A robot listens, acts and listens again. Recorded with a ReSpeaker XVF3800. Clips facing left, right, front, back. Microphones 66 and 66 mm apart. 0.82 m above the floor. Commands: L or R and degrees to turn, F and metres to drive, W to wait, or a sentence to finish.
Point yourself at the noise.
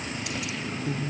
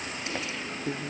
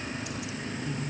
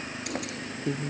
R150
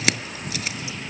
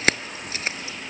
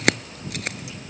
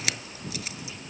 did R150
R35
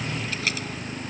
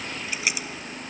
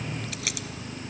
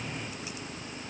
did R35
R15
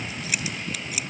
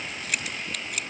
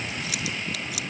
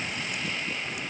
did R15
Facing the keys jangling.